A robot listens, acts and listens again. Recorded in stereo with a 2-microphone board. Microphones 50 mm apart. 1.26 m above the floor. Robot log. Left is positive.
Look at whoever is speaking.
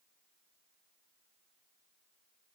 cmd idle
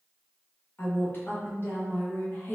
note: The woman speaking: about 40° left or 140° left.
cmd yaw +40
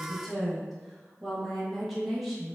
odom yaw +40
end: Facing the woman speaking.